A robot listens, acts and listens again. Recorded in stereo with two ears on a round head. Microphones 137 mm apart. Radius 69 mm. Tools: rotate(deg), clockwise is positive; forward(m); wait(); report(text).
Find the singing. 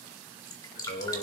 rotate(-90)
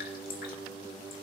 report("Facing the singing, 2 to 4 m away.")